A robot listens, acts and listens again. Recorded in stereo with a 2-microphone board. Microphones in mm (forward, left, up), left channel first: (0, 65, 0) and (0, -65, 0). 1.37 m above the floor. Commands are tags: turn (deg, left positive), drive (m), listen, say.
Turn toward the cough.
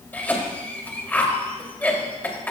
<turn deg="30"/>
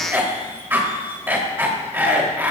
<turn deg="-15"/>
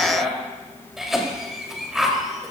<say>Facing the cough.</say>